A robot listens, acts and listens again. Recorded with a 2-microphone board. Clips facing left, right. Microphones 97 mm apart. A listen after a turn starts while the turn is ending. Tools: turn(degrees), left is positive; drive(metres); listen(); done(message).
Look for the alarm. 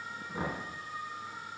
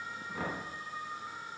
listen()
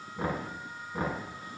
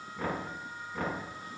listen()
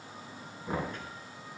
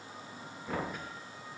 done("I can't make out an alarm to turn to.")